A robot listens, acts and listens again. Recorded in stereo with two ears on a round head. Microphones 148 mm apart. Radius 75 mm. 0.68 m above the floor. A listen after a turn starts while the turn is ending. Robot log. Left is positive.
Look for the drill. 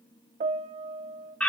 cmd idle
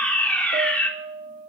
cmd idle
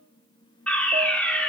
end: I can't make out a drill, only a piano and a fire alarm.